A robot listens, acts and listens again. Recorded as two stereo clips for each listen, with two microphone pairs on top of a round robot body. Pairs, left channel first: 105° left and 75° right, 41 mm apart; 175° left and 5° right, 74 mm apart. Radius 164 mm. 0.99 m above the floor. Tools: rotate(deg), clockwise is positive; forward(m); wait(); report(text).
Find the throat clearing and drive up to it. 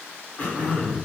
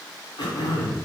rotate(-155)
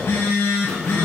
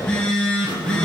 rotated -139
rotate(-15)
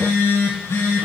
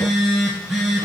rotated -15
wait()
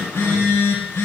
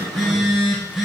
report("Facing where the throat clearing came from. I can't hear it now. I did not reach it.")